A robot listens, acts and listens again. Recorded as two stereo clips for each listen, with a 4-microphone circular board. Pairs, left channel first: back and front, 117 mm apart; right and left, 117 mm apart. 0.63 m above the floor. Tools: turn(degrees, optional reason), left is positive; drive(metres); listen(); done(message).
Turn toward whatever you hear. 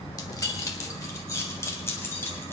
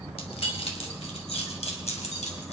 turn(degrees=-110, reason="The keys jangling: 110° right.")
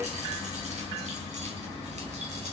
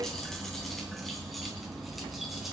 listen()
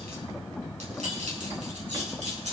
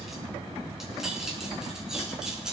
done("Facing the keys jangling, over 4 m away.")